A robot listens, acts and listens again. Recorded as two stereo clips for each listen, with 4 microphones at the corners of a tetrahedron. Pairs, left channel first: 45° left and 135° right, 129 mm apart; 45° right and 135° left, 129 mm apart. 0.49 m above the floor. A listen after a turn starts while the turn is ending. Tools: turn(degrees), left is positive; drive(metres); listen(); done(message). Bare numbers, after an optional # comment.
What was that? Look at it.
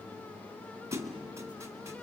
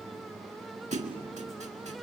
# The thud: 160° left.
turn(160)
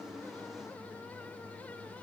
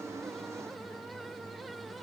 done("I heard a thud from this way, but can't make it out now.")